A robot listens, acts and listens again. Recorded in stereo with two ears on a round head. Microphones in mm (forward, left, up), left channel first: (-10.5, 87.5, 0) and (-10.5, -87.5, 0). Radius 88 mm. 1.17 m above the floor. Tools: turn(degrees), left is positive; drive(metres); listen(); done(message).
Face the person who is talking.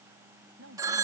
turn(degrees=-70)
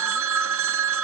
listen()
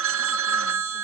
listen()
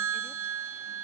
done("I heard a woman speaking, but can't make it out now. It was about straight ahead or 40° right.")